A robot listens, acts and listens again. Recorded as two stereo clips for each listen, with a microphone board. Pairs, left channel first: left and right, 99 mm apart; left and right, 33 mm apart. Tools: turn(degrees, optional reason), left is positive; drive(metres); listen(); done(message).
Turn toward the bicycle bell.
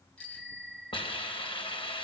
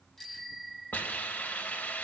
turn(degrees=30)
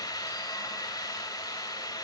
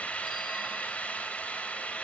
listen()
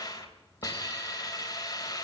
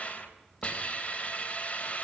listen()
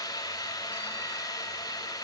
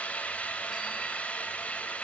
done("I heard a bicycle bell, but can't make it out now. It was about 20° right or 140° left.")